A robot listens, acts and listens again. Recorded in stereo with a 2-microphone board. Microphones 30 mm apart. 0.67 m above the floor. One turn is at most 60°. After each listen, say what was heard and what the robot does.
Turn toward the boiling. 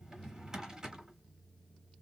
Keep listening.
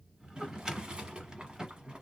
The boiling: about 30° right or 150° right. Turn 30° right.
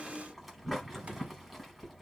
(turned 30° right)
Facing the boiling, under 1 m away.